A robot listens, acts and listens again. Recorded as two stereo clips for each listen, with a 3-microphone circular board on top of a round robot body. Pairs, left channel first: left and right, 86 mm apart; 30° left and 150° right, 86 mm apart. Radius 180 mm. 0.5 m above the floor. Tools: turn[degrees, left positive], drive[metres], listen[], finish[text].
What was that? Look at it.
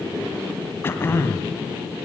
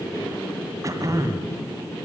Thought: The throat clearing: 155° left.
Action: turn[155]
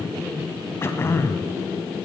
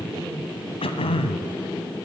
Thought: The throat clearing is now 25° left.
Action: turn[25]
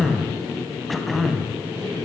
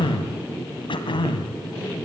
Action: finish[Found it: throat clearing, straight ahead.]